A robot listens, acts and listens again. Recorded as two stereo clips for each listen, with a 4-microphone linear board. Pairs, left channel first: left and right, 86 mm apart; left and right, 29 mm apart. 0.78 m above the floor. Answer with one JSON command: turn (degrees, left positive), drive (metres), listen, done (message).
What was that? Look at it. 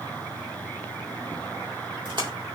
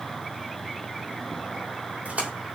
{"turn": -65}
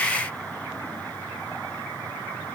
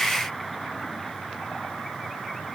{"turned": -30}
{"listen": true}
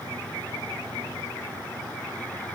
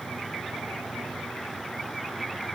{"done": "I heard a splash, but can't make it out now. It was about 35° right or 85° right."}